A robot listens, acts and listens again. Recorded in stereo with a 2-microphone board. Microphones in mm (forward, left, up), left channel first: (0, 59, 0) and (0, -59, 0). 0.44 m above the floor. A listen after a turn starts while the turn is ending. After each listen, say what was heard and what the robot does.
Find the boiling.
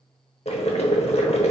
The boiling: about 60° left or 120° left. Turn 60° left.
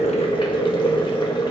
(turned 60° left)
So it is at 50° left. Turn 50° left.
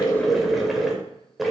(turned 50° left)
Facing the boiling, under 1 m away.